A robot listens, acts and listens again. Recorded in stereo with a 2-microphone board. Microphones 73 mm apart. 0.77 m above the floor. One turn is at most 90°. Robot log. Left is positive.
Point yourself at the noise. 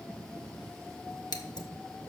note: The scissors: about 75° left or 105° left.
cmd yaw +75
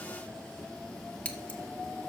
note: So it is at 20° left.
cmd yaw +20
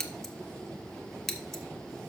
end: Found it: scissors, straight ahead, 1 to 2 m away.